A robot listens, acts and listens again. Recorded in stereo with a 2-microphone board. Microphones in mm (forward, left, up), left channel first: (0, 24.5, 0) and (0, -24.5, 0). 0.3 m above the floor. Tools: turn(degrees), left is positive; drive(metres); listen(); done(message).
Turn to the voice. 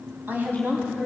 turn(degrees=-40)
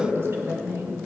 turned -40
turn(degrees=-85)
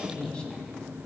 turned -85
turn(degrees=20)
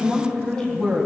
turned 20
done("Facing the woman speaking, 1 to 2 m away.")